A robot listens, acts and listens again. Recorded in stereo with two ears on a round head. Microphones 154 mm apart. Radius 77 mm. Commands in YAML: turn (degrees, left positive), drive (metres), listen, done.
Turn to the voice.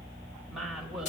turn: -30
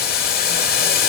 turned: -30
listen: true
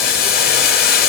listen: true
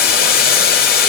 done: "I heard a woman speaking, but can't make it out now. It was about 25° left or 145° right."